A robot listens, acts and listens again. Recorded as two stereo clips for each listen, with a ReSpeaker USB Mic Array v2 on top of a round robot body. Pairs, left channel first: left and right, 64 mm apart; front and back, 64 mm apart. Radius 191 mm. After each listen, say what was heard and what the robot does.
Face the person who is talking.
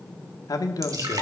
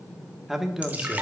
The man speaking: 95° left. Turn 95° left.
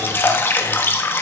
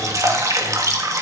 Keep listening.
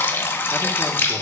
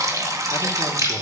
Keep listening.
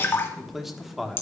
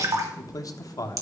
Facing the man speaking.